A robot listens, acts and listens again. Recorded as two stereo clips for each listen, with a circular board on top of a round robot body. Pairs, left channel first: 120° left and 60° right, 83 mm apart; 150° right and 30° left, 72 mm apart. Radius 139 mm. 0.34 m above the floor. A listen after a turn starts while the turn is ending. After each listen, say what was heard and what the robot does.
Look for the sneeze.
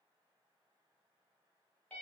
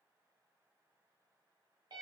Keep listening.
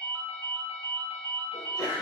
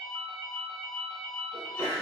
The sneeze: 150° left. Turn 150° left.
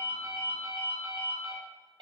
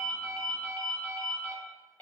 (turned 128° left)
Nothing new. It was at 25° left. Turn 25° left.
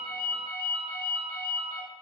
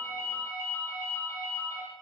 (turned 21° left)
Facing where the sneeze came from. I can't hear it now.